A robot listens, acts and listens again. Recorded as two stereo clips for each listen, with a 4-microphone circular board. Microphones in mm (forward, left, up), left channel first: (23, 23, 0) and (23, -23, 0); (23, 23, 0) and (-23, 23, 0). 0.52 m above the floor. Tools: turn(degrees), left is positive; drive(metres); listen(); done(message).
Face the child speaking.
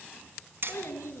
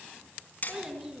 turn(degrees=100)
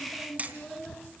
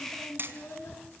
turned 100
done("Found it: a child speaking, straight ahead, over 4 m away.")